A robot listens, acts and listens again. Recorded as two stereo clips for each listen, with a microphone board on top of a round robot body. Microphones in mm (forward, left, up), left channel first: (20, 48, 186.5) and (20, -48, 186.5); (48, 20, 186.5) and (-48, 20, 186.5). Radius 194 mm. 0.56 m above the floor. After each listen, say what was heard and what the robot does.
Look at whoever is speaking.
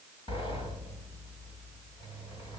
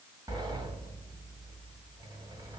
Keep listening.
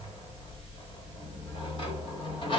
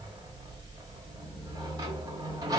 Keep listening.
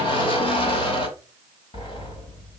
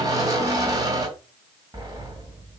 I can't make out anyone speaking to turn to.